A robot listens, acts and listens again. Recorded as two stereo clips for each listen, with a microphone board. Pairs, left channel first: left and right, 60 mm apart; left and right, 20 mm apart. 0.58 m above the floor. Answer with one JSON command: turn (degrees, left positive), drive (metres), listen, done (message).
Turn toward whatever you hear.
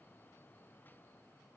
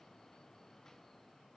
{"listen": true}
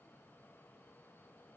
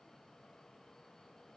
{"listen": true}
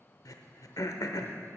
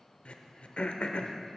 {"turn": 70}
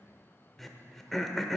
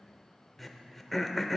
{"done": "Found it: throat clearing, straight ahead, under 1 m away."}